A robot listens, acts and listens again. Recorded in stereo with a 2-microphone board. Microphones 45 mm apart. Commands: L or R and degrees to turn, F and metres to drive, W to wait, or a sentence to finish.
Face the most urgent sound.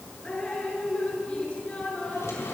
W
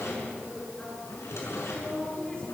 W
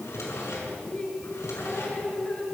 I can't make out anything urgent, only dripping and a drawer.